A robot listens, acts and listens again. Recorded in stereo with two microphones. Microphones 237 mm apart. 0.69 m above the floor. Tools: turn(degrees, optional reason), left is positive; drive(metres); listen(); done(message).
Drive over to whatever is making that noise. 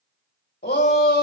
turn(degrees=45, reason="The shout: about 45° left or 135° left.")
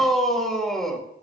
drive(metres=1.0)
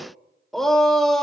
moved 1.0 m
drive(metres=1.0)
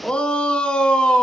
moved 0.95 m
drive(metres=1.0)
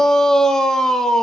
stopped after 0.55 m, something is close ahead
done("I am next to the shout.")